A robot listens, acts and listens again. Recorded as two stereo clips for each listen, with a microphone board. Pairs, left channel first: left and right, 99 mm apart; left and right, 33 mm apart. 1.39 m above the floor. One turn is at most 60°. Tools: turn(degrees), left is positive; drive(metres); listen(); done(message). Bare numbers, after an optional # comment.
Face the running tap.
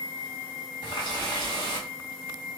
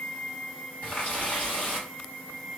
# The running tap: about 50° left or 130° left.
turn(50)
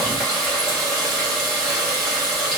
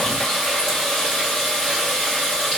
done("Facing the running tap, 1 to 2 m away.")